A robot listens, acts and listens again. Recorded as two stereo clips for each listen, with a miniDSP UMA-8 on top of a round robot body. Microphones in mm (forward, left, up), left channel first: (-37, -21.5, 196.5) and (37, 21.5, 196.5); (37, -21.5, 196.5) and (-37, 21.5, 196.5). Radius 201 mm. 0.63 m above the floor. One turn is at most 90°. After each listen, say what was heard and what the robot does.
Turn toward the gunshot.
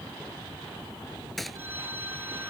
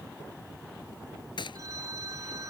The gunshot: 60° right. Turn 60° right.
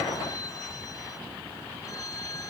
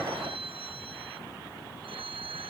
I heard a gunshot from this way, but can't make it out now.